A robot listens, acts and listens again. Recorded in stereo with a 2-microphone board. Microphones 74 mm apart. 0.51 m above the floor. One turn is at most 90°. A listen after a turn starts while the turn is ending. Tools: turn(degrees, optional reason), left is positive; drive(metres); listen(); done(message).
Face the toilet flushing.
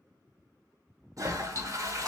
turn(degrees=-50, reason="The toilet flushing: about 50° right or 130° right.")
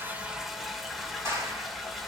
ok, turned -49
done("Facing the toilet flushing, under 1 m away.")